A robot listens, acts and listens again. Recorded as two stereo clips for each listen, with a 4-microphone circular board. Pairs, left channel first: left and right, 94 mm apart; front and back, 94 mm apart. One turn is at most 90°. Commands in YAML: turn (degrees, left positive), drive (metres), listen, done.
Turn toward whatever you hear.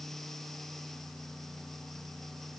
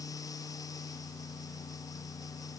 listen: true
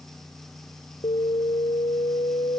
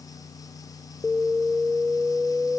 turn: 90
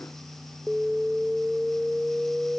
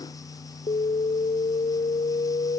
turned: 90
done: "Found it: an alarm, straight ahead."